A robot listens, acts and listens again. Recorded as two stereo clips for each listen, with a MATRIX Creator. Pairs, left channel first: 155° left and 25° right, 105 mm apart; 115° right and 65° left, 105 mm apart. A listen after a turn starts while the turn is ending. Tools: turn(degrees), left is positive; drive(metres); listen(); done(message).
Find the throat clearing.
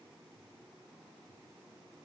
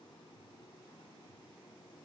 listen()
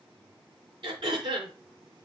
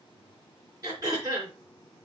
turn(degrees=15)
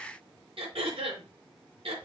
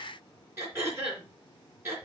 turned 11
done("Facing the throat clearing, 2 to 4 m away.")